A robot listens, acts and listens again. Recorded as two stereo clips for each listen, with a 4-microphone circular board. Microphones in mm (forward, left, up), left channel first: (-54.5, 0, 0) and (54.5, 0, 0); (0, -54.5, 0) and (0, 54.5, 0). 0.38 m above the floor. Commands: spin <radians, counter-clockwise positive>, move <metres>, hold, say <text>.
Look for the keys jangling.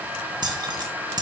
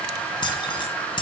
spin -0.87
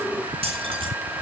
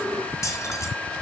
spin -0.52
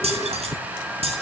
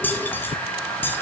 spin -0.35
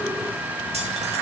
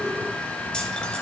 spin -0.17
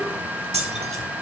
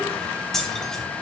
say Facing the keys jangling.